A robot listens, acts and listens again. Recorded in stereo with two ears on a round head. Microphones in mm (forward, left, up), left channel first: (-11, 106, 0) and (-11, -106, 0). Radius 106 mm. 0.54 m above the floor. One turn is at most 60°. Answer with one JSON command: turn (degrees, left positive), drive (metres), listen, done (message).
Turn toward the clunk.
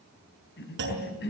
{"turn": -50}
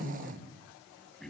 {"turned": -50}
{"listen": true}
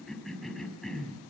{"done": "I heard a clunk, but can't make it out now. It was about straight ahead or 80° right."}